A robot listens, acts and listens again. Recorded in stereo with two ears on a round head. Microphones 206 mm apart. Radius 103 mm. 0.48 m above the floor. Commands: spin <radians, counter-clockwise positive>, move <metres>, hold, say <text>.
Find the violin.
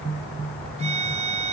spin -0.52
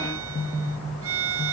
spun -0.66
spin -1.92
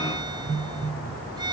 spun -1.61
spin -0.35
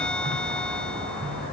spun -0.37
hold
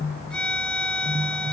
say Facing the violin.